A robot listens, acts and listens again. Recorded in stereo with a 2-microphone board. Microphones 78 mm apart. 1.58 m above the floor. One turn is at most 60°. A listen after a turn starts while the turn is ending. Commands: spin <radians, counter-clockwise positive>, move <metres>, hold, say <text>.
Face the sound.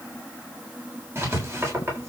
spin -0.61
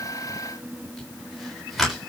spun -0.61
say Facing the writing, over 4 m away.